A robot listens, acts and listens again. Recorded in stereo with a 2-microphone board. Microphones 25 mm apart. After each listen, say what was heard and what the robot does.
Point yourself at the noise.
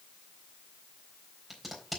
Turn 30° left.
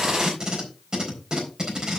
So it is at 35° right. Turn 35° right.
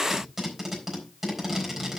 The tape being pulled is now 15° right. Turn 15° right.
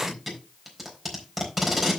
Facing the tape being pulled.